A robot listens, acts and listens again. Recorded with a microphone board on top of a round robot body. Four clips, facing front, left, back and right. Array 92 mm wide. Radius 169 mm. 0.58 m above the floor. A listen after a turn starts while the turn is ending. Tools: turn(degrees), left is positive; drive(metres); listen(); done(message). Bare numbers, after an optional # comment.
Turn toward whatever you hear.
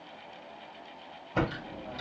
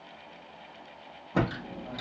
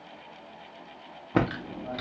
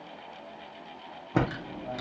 # The typing on a keyboard: 160° right.
turn(-160)
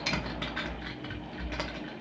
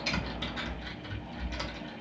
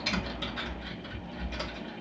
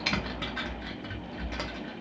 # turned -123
# The typing on a keyboard is now 35° right.
turn(-35)
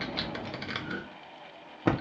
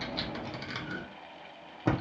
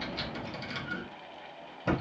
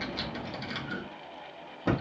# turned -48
# The typing on a keyboard is now 15° left.
turn(15)
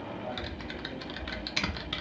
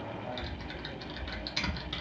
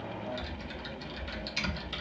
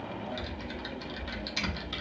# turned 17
done("Facing the typing on a keyboard, 1 to 2 m away.")